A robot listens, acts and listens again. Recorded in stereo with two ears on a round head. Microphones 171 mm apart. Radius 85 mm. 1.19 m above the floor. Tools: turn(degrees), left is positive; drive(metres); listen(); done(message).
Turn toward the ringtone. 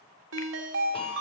turn(degrees=-75)
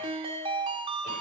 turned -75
turn(degrees=-30)
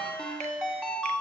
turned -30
done("Facing the ringtone.")